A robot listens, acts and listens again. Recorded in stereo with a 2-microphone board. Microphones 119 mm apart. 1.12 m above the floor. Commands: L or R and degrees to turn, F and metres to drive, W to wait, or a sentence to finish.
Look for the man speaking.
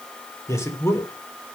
L20
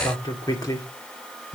L25
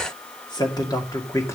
L25
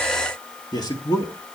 L30
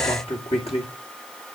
L125
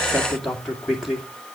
Facing the man speaking.